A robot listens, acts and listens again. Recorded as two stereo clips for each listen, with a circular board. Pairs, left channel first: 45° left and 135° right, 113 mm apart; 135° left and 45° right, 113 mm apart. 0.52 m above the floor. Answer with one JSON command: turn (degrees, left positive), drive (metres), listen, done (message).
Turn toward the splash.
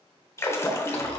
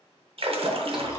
{"turn": -20}
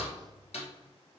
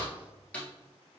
{"done": "Facing where the splash came from. I can't hear it now."}